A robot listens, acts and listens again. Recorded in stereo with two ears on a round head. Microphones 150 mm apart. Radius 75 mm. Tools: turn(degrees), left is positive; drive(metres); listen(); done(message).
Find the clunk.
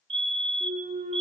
turn(degrees=-40)
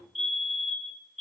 listen()
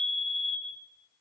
done("I heard a clunk, but can't make it out now. It was about straight ahead or 100° right.")